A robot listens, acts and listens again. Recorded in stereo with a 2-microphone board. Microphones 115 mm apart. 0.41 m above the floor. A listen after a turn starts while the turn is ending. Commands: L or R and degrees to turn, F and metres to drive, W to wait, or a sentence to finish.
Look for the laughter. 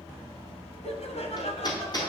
L65
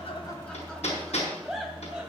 Facing the laughter.